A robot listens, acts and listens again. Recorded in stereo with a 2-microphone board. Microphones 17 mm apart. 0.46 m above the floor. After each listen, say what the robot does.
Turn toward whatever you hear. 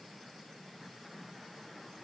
Keep listening.
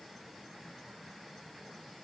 Keep listening.
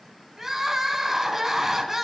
Turn 20° right.
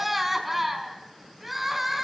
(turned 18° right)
Facing the crying.